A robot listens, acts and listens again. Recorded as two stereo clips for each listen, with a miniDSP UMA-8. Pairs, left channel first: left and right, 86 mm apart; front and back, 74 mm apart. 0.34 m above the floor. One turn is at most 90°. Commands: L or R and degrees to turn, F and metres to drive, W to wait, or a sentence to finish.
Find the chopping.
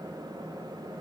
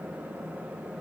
W
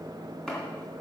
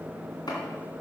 L10
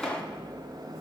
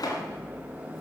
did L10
Found it: chopping, straight ahead.